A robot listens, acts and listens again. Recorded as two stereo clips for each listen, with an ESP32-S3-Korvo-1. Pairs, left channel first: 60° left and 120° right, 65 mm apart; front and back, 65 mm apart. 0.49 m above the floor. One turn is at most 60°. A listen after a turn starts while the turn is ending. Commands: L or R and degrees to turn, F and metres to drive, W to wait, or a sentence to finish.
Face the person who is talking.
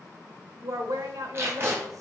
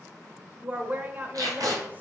R60
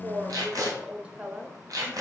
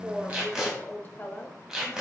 R50
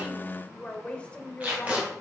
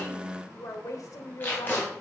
R10
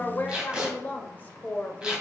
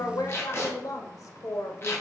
Facing the woman speaking.